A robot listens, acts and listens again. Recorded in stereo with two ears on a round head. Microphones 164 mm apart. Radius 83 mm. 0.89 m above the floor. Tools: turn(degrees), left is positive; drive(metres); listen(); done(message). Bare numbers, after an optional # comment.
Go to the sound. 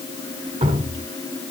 # The dripping: about 30° right or 150° right.
turn(-30)
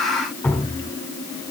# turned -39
# So it is at 10° left.
turn(10)
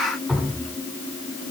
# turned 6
drive(1.0)
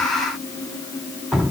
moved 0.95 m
drive(1.0)
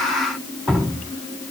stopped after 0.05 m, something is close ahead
done("I am next to the dripping.")